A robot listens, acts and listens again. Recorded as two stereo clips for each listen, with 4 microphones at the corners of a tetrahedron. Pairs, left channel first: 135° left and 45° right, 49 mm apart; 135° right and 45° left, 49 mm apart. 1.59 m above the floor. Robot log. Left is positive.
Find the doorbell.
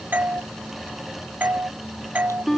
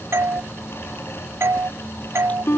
note: The doorbell: 10° left.
cmd yaw +10
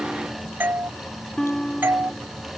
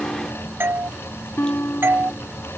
end: Facing the doorbell.